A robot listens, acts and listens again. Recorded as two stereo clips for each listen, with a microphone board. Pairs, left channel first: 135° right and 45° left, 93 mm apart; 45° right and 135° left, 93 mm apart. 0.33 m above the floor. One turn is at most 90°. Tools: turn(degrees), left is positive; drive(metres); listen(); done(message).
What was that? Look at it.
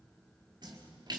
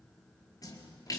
done("Found it: a splash, straight ahead, over 4 m away.")